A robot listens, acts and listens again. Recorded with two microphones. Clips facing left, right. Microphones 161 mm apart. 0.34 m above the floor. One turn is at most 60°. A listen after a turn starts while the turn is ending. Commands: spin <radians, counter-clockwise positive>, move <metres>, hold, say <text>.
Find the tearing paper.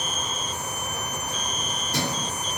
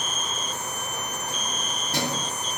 hold
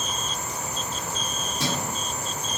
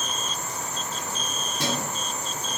hold
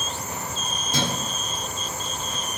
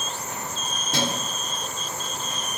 say I can't make out tearing paper to turn to.